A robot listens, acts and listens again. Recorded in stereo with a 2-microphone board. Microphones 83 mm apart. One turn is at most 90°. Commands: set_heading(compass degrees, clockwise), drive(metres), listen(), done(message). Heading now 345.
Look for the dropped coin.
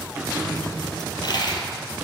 set_heading(285)
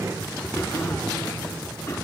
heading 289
listen()
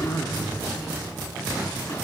done("I heard a dropped coin, but can't make it out now. It was about 5° left or 65° left.")